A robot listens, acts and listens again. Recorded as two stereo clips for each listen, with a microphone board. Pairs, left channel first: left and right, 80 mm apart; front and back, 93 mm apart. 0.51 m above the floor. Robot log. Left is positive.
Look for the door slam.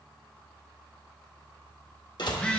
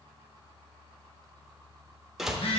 note: The door slam: 95° left.
cmd yaw +95
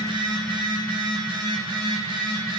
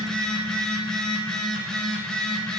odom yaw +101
end: I heard a door slam from this way, but can't make it out now.